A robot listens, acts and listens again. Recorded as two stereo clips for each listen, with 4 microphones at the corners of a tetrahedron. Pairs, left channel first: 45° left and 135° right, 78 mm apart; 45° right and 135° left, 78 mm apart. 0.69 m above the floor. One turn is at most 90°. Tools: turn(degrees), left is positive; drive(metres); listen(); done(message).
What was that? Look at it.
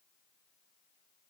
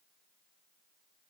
listen()
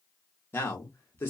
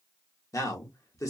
turn(degrees=-10)
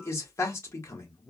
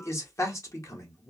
done("Facing the man speaking, 1 to 2 m away.")